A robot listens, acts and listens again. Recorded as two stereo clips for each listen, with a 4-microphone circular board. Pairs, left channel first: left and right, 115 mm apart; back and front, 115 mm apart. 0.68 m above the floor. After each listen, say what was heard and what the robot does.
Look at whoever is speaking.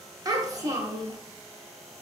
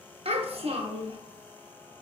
The child speaking: 30° right. Turn 30° right.
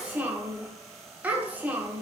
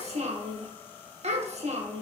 The child speaking is now 15° right. Turn 15° right.
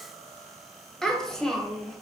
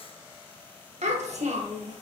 Found it: a child speaking, straight ahead.